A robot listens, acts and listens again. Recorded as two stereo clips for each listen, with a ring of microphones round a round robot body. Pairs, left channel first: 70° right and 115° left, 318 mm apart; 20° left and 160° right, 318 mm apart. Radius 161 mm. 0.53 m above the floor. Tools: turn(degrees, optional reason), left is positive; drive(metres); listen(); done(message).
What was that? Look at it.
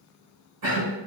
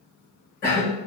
turn(degrees=105, reason="The cough: 105° left.")
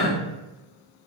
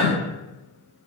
turn(degrees=10, reason="The cough is now 10° left.")
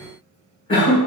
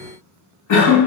done("Facing the cough, 1 to 2 m away.")